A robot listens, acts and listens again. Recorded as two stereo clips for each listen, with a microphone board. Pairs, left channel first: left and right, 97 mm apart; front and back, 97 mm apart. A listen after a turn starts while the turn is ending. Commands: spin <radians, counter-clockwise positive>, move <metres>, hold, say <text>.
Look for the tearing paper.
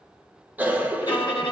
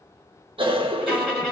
hold
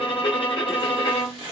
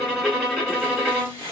spin -2.09
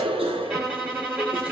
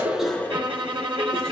hold
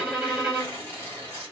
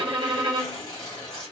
spin -0.44
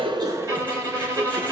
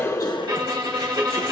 hold
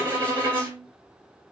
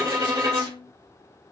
hold
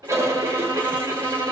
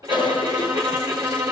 say Facing where the tearing paper came from. I can't hear it now.